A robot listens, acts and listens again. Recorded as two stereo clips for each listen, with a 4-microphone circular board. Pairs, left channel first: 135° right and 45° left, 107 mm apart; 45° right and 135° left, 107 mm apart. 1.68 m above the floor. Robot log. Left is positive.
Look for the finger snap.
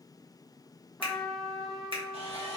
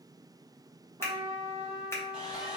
note: The finger snap: 15° left.
cmd yaw +15
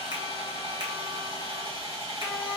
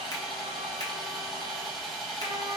cmd idle
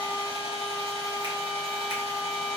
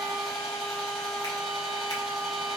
cmd idle
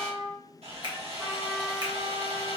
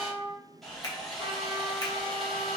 end: I heard a finger snap from this way, but can't make it out now.